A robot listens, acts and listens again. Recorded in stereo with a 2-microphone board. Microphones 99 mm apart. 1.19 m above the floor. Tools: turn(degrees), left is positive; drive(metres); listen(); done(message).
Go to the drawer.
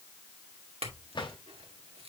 turn(degrees=55)
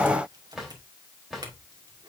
drive(metres=1.0)
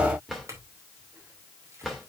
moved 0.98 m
drive(metres=1.0)
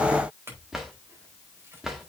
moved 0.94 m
drive(metres=1.0)
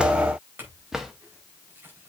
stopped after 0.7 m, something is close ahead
done("Arrived at the drawer, straight ahead.")